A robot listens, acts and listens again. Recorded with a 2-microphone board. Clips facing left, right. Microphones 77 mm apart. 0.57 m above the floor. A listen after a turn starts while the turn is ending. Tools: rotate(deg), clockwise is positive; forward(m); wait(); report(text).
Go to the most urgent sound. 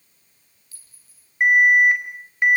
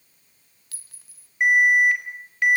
rotate(-25)
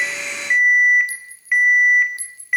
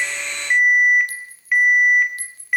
forward(1.0)
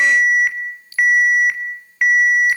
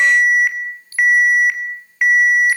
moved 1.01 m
forward(1.0)
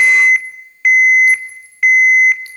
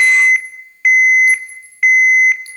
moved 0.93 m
forward(1.0)
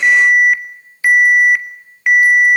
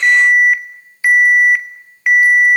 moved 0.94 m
forward(1.0)
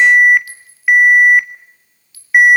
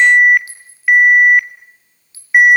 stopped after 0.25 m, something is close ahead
rotate(-10)
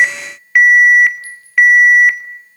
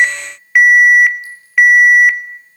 report("I am next to the alarm.")